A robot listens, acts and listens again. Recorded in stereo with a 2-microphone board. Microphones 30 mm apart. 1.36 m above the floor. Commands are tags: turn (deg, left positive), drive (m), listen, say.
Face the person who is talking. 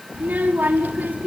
<turn deg="-90"/>
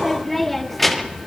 <say>Found it: a child speaking, straight ahead.</say>